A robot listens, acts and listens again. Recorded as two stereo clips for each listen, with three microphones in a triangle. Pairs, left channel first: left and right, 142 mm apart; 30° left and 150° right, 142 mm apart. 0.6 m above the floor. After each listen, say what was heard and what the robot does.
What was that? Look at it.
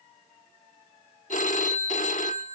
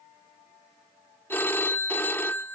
The phone ringing: 105° left. Turn 105° left.
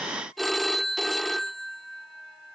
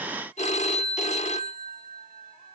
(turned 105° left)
Facing the phone ringing.